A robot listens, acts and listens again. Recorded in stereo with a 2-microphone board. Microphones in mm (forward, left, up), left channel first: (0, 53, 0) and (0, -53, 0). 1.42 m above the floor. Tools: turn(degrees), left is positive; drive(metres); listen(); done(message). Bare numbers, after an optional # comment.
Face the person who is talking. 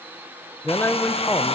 # The man speaking: about 20° left or 160° left.
turn(20)
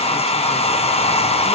listen()
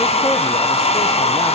listen()
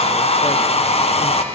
done("I heard a man speaking, but can't make it out now. It was about straight ahead or 140° left.")